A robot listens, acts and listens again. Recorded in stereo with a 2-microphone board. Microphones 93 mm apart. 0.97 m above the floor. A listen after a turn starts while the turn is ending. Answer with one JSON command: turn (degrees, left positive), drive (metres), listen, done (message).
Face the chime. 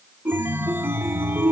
{"turn": -25}
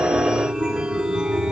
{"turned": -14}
{"turn": -10}
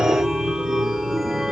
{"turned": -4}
{"done": "Facing the chime, 1 to 2 m away."}